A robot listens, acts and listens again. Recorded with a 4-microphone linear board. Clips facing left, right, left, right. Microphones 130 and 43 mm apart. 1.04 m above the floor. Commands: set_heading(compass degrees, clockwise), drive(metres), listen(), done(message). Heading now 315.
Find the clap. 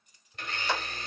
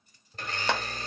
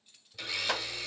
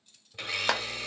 set_heading(20)
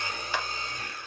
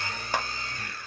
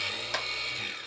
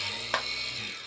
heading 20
set_heading(65)
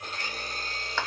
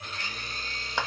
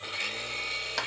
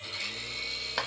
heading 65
set_heading(80)
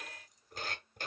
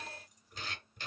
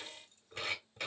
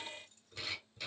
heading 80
listen()
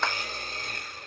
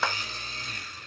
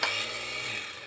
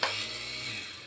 done("Found it: a clap, straight ahead, 1 to 2 m away.")